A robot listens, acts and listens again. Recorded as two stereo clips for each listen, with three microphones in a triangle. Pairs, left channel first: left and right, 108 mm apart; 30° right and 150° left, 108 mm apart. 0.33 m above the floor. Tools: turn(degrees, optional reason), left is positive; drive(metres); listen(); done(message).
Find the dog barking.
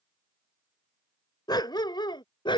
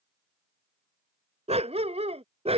turn(degrees=130, reason="The dog barking: 130° left.")
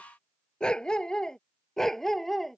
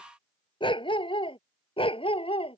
done("Facing the dog barking.")